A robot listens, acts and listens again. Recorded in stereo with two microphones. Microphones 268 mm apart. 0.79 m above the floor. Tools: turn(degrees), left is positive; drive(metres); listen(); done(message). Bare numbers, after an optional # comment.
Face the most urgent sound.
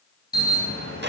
# The alarm: about 35° left or 145° left.
turn(35)
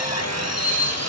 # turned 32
# So it is at 110° left.
turn(110)
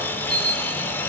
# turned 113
done("Found it: an alarm, straight ahead, over 4 m away.")